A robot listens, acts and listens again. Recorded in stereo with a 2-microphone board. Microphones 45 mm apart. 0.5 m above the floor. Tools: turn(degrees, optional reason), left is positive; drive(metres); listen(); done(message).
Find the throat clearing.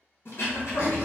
turn(degrees=90)
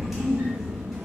listen()
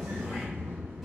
listen()
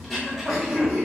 done("Facing the throat clearing.")